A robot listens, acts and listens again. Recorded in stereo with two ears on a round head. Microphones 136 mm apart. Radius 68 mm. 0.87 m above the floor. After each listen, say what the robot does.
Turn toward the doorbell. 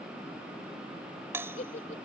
Turn 15° right.
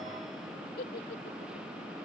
Keep listening.
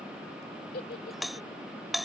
Found it: a doorbell, straight ahead.